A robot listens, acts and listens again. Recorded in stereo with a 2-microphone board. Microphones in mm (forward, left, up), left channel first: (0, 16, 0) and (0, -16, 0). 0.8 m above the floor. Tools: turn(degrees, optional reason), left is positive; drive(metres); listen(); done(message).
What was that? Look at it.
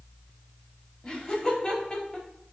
turn(degrees=30, reason="The laughter: about 30° left or 150° left.")
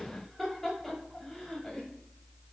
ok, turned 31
turn(degrees=10, reason="So it is at 10° left.")
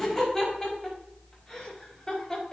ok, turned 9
turn(degrees=20, reason="The laughter is now 20° left.")
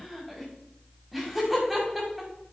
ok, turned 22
done("Facing the laughter, over 4 m away.")